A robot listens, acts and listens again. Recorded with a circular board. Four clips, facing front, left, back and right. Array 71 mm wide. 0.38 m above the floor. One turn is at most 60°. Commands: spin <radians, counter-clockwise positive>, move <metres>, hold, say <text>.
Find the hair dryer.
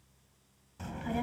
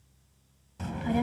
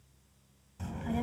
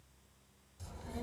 hold
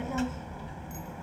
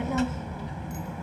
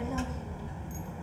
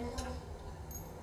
hold
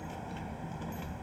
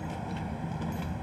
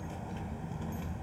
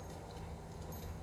say I can't make out a hair dryer, only a child speaking.